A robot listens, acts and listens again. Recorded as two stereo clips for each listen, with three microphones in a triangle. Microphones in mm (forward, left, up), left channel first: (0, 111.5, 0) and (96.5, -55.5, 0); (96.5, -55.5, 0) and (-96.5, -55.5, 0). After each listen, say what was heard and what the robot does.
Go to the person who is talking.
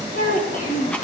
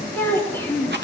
The child speaking: 80° left. Turn 80° left.
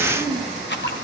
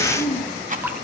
The child speaking is now 10° left. Turn 10° left.
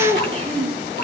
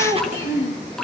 Drive 1.0 m forward.
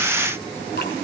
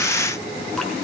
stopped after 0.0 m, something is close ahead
Keep listening.
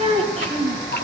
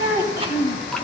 Blocked. The child speaking is further on, straight ahead.